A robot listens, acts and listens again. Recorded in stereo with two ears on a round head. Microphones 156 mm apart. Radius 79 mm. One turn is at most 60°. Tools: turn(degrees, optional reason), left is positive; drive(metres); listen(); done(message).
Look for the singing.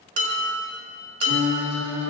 turn(degrees=-45, reason="The singing: about 45° right or 135° right.")
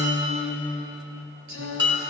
turn(degrees=-60, reason="So it is at 100° right.")
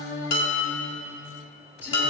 turn(degrees=-10, reason="The singing is now 10° right.")
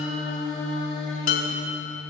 done("Found it: singing, straight ahead, 2 to 4 m away.")